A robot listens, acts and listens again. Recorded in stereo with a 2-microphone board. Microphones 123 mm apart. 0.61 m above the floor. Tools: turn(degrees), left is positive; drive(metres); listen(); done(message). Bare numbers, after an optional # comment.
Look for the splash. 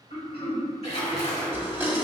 # The splash: about 60° left or 120° left.
turn(60)
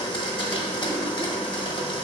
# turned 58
listen()
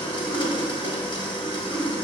done("I heard a splash, but can't make it out now. It was about straight ahead or 60° left.")